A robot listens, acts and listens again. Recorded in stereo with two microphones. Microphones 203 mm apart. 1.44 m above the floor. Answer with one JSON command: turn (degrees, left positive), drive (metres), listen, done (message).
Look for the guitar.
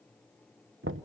{"listen": true}
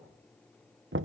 {"listen": true}
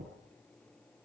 {"done": "I can't make out a guitar to turn to."}